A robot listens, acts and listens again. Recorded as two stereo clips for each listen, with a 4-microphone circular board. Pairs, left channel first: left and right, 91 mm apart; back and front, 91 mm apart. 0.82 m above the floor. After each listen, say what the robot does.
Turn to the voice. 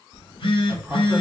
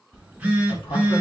Turn 170° right.
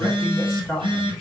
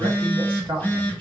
Turn 10° left.
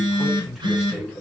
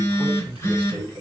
Found it: a man speaking, straight ahead.